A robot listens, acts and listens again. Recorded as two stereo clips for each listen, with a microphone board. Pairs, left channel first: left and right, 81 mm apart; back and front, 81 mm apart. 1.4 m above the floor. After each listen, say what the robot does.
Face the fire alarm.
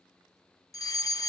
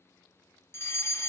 Turn 125° left.
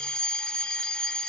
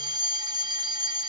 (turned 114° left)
Turn 10° left.
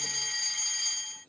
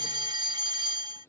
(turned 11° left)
Facing the fire alarm.